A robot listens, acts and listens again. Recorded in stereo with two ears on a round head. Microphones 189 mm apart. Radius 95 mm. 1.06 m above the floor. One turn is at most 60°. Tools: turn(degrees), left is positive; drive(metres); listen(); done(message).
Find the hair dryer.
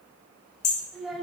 listen()
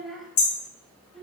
listen()
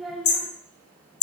done("I can't make out a hair dryer to turn to.")